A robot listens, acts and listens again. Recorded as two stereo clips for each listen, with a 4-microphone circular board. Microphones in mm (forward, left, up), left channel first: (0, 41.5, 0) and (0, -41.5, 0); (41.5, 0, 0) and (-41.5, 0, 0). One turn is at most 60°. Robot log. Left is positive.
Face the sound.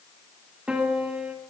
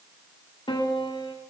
note: The piano: 15° right.
cmd yaw -15
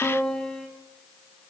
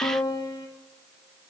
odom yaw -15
end: Found it: a piano, straight ahead, 2 to 4 m away.